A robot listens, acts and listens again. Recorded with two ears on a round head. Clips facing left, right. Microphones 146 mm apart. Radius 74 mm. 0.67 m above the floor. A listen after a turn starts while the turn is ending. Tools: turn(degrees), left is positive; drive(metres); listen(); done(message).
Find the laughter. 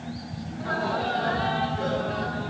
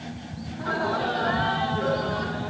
turn(degrees=30)
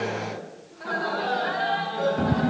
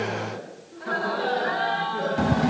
turn(degrees=125)
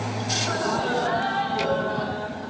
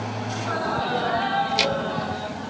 done("Found it: laughter, straight ahead, over 4 m away.")